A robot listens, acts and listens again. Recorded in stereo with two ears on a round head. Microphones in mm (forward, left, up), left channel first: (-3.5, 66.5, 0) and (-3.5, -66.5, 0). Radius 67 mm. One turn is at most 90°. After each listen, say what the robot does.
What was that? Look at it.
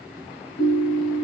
Turn 75° left.
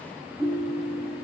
Facing the ringtone, 1 to 2 m away.